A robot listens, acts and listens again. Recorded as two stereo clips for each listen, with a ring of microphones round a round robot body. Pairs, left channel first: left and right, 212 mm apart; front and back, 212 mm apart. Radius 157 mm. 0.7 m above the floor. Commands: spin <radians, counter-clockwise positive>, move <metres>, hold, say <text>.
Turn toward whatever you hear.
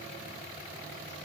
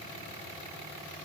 hold
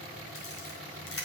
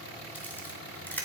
spin 1.40
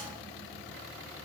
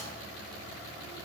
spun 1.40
hold
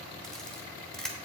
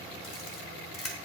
say Found it: a camera shutter, straight ahead.